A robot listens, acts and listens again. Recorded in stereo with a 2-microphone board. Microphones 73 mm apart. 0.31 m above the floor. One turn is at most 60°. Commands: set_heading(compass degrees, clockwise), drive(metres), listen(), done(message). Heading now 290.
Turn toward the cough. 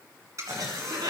set_heading(350)
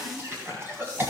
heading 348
set_heading(28)
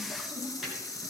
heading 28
listen()
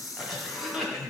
done("Facing the cough, 1 to 2 m away.")